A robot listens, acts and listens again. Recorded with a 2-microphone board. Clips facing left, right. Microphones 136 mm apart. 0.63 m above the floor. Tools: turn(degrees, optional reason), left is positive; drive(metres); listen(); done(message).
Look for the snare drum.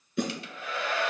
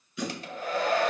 turn(degrees=55, reason="The snare drum: about 55° left or 125° left.")
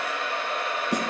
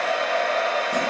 listen()
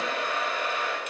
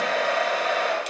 listen()
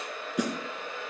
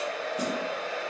turn(degrees=70, reason="So it is at 70° left.")
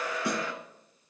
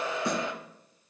turn(degrees=10, reason="The snare drum is now 10° left.")
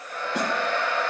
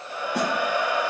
listen()
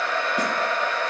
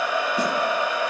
listen()
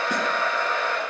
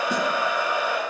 done("Facing where the snare drum came from. I can't hear it now.")